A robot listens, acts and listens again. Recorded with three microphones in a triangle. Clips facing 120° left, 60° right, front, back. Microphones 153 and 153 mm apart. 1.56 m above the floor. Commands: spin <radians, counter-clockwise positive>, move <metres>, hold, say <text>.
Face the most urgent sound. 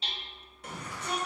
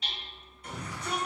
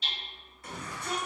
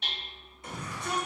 spin 1.92
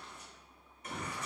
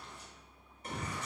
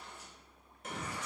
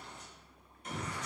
say Facing the shout, 1 to 2 m away.